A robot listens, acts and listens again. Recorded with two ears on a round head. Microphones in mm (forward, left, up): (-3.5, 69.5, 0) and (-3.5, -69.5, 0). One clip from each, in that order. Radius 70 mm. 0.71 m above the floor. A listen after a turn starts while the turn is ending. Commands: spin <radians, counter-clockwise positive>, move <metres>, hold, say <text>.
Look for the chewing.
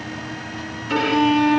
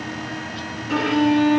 hold
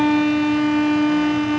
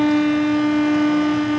hold
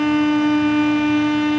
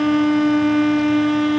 say I can't make out chewing, only a violin.